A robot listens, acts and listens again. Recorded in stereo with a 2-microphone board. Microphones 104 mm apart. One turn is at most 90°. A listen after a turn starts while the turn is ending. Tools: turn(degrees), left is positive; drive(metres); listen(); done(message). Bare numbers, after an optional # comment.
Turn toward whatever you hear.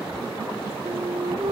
turn(-90)
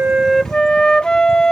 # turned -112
# So it is at 10° left.
turn(10)
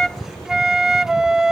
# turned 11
done("Facing the flute.")